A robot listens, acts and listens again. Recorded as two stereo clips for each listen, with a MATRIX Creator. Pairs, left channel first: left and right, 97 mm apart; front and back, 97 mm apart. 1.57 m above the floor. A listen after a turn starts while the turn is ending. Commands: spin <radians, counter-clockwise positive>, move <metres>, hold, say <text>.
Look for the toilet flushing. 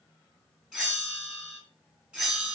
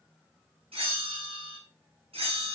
hold
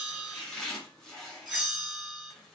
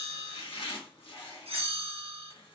hold
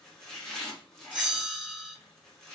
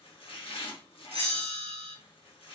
say I can't make out a toilet flushing, only chopping and a bell.